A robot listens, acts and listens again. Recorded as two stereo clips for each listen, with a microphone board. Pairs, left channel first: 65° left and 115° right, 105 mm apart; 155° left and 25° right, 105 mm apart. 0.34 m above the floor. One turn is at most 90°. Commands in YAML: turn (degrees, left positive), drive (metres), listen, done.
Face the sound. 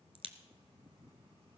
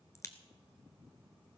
turn: -90
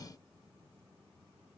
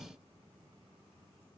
turn: -50
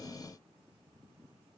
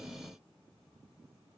done: "I heard a crack from this way, but can't make it out now."